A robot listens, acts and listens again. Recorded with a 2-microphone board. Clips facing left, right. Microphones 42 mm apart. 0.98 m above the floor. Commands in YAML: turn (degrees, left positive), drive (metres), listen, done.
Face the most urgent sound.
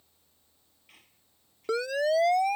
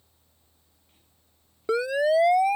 turn: -30
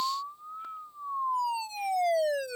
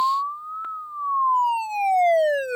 turn: -135
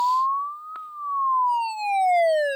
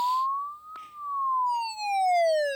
turn: 25
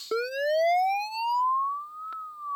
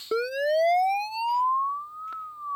done: "Facing the siren."